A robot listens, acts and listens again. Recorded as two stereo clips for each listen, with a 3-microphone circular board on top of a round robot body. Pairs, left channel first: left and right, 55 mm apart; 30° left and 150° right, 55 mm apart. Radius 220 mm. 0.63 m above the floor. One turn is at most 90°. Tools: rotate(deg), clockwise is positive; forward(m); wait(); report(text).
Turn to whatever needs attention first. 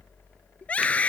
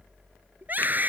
rotate(-90)
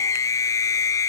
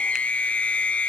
rotate(-90)
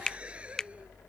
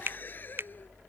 wait()
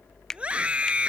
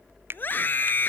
rotate(20)
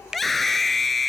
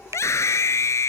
report("Found it: a scream, straight ahead.")